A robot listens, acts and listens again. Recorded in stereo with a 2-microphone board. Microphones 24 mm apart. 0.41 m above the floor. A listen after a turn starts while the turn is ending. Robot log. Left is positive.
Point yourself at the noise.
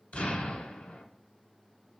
cmd yaw +90
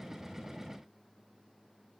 end: Facing where the explosion came from. I can't hear it now.